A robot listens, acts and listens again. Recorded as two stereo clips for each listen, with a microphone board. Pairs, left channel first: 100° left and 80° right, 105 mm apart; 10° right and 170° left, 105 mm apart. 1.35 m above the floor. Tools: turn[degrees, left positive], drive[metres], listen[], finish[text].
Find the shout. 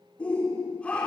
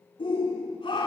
Thought: The shout: 20° left.
Action: turn[20]
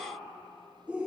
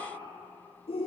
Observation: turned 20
Action: finish[Found it: a shout, straight ahead.]